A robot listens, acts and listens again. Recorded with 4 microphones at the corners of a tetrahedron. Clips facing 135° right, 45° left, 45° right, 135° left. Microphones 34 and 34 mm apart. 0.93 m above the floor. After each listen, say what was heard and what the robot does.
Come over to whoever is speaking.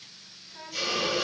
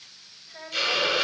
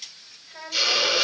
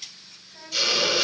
Drive 1.0 m forward.
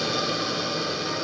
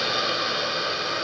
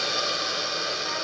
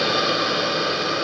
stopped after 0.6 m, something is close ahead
Keep listening.
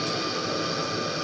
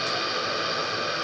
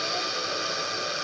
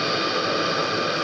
Keep listening.
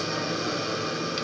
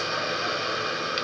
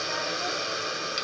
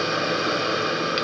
Facing where the child speaking came from. I can't hear it now. I did not reach it.